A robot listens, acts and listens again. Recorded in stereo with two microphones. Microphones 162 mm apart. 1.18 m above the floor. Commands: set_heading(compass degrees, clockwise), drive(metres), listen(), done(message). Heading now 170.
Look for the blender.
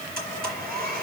set_heading(240)
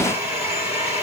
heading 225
set_heading(240)
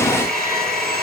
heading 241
done("Found it: a blender, straight ahead, over 4 m away.")